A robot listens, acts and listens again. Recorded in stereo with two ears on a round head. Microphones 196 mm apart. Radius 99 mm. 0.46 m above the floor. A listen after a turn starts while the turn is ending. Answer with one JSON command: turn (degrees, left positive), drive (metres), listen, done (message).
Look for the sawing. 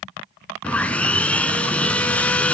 {"turn": 30}
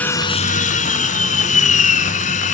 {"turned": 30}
{"turn": 145}
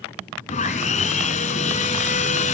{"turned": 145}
{"turn": 35}
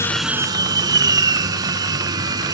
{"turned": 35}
{"turn": -15}
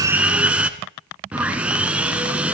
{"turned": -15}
{"done": "Found it: sawing, straight ahead."}